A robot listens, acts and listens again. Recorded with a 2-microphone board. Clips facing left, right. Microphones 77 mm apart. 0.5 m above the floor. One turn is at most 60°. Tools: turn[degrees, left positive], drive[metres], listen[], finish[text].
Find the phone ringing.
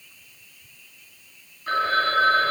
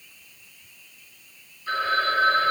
Thought: The phone ringing: about 45° left or 135° left.
Action: turn[45]
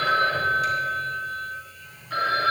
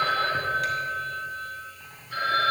Thought: So it is at 90° left.
Action: turn[60]
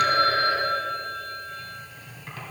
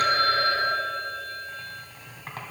Thought: The phone ringing is now 30° left.
Action: turn[30]
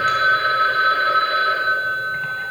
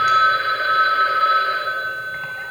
Action: finish[Facing the phone ringing.]